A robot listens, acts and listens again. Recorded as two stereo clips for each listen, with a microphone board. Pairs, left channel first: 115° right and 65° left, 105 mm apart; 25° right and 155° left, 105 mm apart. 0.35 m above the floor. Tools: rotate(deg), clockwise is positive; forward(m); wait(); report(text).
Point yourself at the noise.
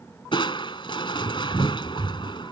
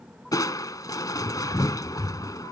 rotate(75)
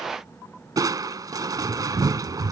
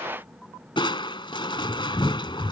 rotate(-15)
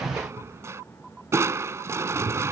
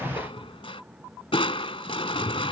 report("Facing the crushing.")